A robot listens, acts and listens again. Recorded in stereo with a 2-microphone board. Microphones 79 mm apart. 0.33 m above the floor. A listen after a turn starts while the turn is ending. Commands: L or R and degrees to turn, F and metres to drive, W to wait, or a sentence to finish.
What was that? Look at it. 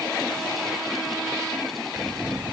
R25
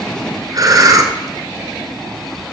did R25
R130
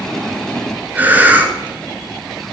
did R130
R20
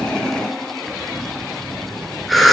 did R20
Facing the breathing.